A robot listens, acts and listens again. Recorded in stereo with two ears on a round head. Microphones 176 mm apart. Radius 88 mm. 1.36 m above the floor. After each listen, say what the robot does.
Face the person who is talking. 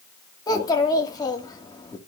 Turn 20° left.
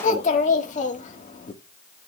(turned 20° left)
Turn 140° left.
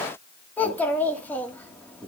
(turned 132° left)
Turn 10° left.
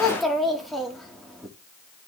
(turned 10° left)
Facing the child speaking, 2 to 4 m away.